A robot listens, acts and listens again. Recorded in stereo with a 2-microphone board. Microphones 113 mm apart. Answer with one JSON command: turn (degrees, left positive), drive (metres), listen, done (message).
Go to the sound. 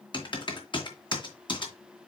{"turn": 45}
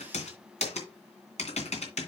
{"turn": 85}
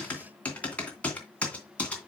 {"turn": 10}
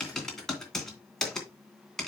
{"drive": 1.0}
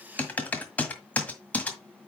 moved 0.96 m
{"turn": 15}
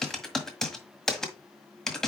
{"drive": 1.0}
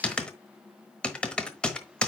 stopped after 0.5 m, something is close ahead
{"turn": 10}
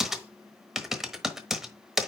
{"done": "Arrived at the typing on a keyboard, straight ahead."}